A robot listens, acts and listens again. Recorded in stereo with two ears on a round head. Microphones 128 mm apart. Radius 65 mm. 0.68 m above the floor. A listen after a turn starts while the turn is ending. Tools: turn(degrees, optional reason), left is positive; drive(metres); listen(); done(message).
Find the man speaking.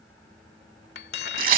listen()
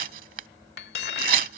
listen()
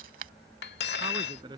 turn(degrees=-30, reason="The man speaking: about 30° right or 150° right.")
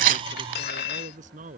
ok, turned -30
turn(degrees=-125, reason="So it is at 125° right.")
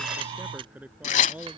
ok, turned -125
turn(degrees=-10, reason="The man speaking is now 10° right.")
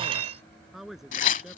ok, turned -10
done("Facing the man speaking.")